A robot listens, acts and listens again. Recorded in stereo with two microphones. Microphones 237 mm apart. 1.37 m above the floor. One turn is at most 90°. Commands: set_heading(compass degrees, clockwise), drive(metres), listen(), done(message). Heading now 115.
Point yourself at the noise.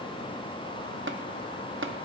set_heading(170)
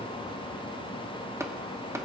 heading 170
set_heading(185)
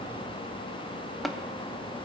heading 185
done("Facing the tapping, under 1 m away.")